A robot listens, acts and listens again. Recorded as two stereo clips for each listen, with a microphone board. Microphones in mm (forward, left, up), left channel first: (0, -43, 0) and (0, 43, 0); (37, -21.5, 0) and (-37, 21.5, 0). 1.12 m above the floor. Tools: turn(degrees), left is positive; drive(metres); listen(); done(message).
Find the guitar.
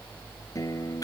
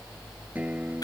turn(degrees=-140)
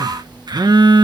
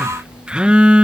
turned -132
listen()
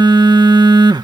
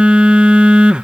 listen()
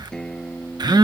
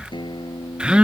done("Found it: a guitar, straight ahead.")